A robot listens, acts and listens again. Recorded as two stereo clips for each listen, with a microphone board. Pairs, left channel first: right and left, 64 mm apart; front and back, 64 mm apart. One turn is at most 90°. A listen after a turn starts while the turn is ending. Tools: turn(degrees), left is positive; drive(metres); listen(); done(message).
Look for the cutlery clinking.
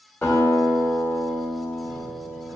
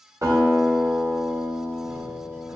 listen()
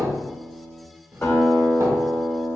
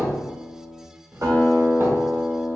listen()
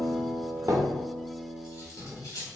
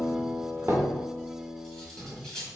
turn(degrees=-85)
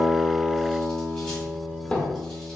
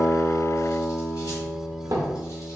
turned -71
turn(degrees=-15)
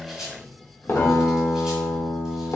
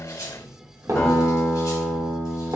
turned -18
listen()
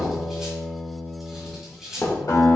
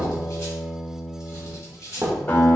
done("Found it: cutlery clinking, straight ahead.")